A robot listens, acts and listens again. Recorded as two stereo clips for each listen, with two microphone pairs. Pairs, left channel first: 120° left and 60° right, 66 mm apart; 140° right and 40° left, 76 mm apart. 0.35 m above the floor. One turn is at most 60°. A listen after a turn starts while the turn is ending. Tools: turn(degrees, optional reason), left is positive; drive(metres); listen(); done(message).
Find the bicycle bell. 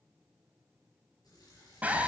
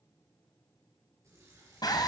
listen()
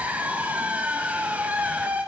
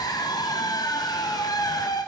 listen()
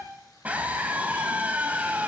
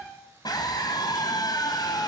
done("I can't make out a bicycle bell, only a scream and a running tap.")